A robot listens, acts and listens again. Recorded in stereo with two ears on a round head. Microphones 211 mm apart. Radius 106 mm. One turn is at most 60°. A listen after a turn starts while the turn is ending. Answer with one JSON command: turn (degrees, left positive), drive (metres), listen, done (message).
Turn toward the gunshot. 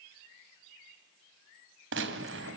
{"turn": -55}
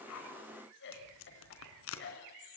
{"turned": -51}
{"listen": true}
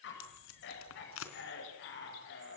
{"done": "I heard a gunshot, but can't make it out now. It was about 5° right or 75° right."}